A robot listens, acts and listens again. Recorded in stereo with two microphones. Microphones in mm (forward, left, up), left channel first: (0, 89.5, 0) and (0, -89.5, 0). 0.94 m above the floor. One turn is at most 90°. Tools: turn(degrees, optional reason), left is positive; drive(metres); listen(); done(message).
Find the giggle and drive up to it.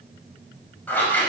listen()
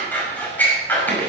listen()
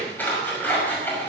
done("I can't make out a giggle, only scissors.")